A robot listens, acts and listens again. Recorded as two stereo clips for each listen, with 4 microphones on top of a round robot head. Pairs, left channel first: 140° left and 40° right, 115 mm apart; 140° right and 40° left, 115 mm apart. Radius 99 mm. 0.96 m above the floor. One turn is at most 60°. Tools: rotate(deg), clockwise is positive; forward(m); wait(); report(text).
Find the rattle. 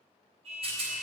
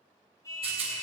report("Facing the rattle, 2 to 4 m away.")